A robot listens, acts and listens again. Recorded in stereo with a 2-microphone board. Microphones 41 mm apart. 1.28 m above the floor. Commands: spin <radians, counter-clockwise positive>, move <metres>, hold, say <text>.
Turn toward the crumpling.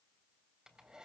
hold
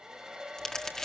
spin 0.26
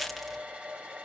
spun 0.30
say Facing the crumpling, 1 to 2 m away.